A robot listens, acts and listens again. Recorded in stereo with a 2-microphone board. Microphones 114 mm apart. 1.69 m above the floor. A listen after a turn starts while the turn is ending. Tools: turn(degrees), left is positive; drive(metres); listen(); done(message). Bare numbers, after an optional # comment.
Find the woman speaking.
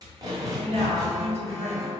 # The woman speaking: about 65° right or 115° right.
turn(-65)
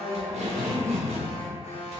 listen()
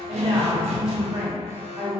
# So it is at 45° right.
turn(-45)
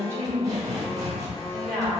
done("Found it: a woman speaking, straight ahead, 1 to 2 m away.")